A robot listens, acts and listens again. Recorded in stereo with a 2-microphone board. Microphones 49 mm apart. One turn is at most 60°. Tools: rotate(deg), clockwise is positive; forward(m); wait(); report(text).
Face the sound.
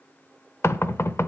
rotate(-60)
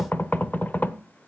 rotate(-40)
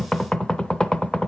rotate(-15)
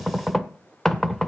rotate(-10)
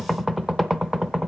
report("Facing the knocking.")